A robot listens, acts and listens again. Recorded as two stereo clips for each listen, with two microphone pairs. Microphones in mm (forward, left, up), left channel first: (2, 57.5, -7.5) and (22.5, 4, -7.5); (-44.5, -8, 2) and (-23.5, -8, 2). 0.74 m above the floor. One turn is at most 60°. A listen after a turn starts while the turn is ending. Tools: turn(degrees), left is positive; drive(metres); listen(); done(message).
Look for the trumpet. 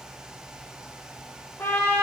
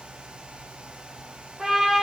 turn(degrees=60)
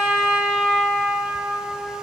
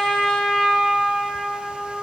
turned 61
done("Found it: a trumpet, straight ahead, 1 to 2 m away.")